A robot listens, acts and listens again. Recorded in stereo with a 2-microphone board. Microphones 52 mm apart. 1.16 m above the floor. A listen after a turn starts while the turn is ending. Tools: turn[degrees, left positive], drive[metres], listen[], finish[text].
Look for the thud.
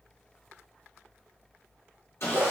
Action: listen[]
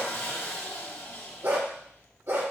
Action: listen[]
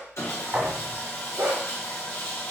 Thought: The thud: about 40° right or 140° right.
Action: turn[-40]
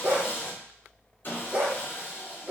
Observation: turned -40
Action: listen[]
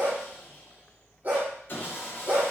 Action: finish[I heard a thud, but can't make it out now. It was about straight ahead or 100° right.]